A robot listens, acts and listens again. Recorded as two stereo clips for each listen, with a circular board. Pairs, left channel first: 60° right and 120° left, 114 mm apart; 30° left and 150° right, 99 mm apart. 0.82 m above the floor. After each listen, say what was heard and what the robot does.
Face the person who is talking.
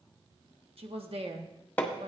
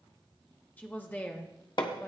The woman speaking: 100° left. Turn 100° left.
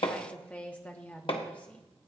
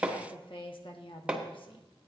The woman speaking is now 15° left. Turn 15° left.
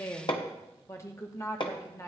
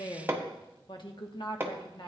Facing the woman speaking.